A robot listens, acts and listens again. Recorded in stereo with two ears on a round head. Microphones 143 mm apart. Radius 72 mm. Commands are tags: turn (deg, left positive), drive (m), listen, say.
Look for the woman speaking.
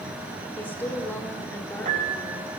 <turn deg="30"/>
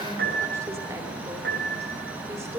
<turn deg="-20"/>
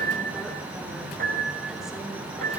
<listen/>
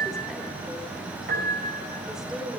<say>Found it: a woman speaking, straight ahead, 2 to 4 m away.</say>